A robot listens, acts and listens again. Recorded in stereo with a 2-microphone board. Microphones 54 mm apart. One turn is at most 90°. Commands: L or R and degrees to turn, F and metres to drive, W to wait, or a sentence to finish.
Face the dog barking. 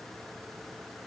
W
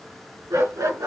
R90
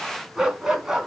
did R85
Found it: a dog barking, straight ahead, 2 to 4 m away.